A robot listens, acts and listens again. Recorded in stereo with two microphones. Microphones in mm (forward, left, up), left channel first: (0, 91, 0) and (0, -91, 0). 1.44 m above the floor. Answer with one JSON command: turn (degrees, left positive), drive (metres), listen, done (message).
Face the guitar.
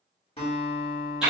{"turn": 30}
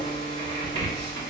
{"listen": true}
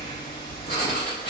{"listen": true}
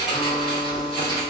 {"turn": 120}
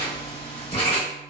{"listen": true}
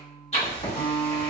{"done": "Facing the guitar."}